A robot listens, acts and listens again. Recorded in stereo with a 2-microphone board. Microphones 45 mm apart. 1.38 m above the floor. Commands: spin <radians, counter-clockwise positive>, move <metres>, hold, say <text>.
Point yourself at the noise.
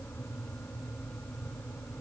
hold
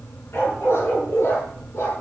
spin 1.31
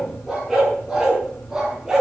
spin -0.17
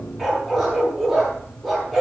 say Facing the dog barking, over 4 m away.